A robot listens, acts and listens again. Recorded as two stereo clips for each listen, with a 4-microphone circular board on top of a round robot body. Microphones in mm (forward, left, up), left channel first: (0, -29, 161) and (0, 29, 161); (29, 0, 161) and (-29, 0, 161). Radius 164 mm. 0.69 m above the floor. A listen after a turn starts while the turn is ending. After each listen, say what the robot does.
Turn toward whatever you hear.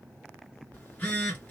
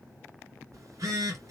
Turn 155° right.
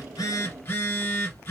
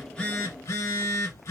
Turn 35° right.
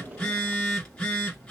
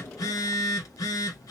Turn 15° right.
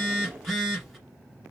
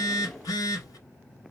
Facing the phone buzzing.